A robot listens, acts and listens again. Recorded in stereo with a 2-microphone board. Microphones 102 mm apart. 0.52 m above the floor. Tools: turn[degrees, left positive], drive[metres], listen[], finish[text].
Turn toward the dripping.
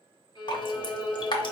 Thought: The dripping: about 50° left or 130° left.
Action: turn[50]
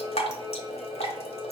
Thought: So it is at 80° left.
Action: turn[80]
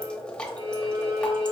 Thought: The dripping is now 10° left.
Action: turn[10]
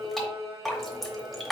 Action: finish[Facing the dripping.]